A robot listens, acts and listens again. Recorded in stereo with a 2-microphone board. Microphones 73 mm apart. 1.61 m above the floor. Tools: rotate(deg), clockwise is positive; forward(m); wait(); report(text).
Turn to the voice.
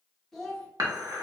rotate(-30)
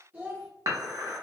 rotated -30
rotate(25)
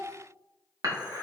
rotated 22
report("Facing the child speaking, under 1 m away.")